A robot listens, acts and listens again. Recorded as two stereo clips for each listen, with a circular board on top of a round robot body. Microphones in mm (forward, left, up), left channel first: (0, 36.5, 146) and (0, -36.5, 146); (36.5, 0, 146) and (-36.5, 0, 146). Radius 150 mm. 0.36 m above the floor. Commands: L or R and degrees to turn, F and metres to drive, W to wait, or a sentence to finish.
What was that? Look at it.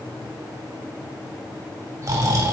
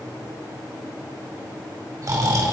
R140
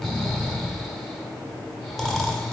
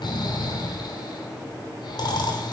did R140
Found it: snoring, straight ahead, 2 to 4 m away.